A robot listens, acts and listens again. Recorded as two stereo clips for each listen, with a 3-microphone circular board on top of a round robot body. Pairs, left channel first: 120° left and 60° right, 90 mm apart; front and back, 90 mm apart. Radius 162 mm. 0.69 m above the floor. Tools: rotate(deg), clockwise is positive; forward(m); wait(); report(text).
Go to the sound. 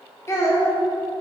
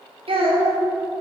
rotate(-180)
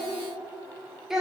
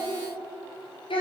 rotate(-25)
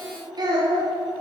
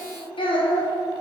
rotate(20)
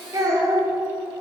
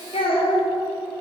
forward(1.0)
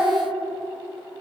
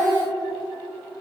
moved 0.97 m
forward(1.0)
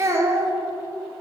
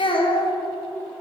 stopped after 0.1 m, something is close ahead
report("Arrived at the child speaking, straight ahead.")